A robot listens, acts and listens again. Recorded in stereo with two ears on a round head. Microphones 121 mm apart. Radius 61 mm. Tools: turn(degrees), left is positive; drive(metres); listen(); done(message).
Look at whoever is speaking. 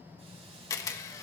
listen()
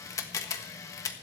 listen()
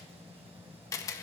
done("I can't make out anyone speaking to turn to.")